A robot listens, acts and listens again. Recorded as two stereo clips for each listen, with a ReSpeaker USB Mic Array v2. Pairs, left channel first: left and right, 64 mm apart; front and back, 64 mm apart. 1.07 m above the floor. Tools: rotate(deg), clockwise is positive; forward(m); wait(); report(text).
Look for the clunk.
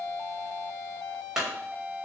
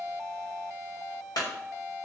rotate(10)
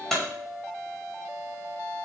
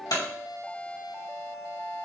report("Facing the clunk.")